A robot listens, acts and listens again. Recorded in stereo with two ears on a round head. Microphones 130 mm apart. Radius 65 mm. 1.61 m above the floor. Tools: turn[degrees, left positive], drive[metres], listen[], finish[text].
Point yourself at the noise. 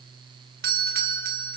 Thought: The doorbell: about 70° right or 110° right.
Action: turn[-70]
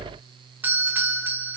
Thought: So it is at 15° right.
Action: turn[-15]
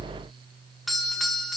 Action: finish[Facing the doorbell.]